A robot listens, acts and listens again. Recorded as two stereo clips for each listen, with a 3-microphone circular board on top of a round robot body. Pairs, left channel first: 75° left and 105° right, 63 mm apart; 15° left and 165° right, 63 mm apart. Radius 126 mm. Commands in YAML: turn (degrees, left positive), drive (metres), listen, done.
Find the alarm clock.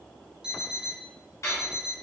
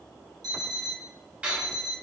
turn: 175
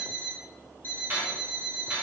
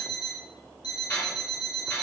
turn: 10
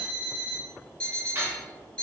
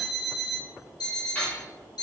done: "Facing the alarm clock, 1 to 2 m away."